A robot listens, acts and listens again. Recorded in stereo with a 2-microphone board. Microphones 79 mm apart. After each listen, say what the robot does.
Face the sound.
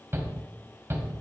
Turn 30° right.
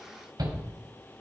Turn 115° right.
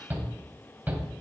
Turn 25° right.
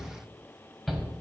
Found it: a shout, straight ahead.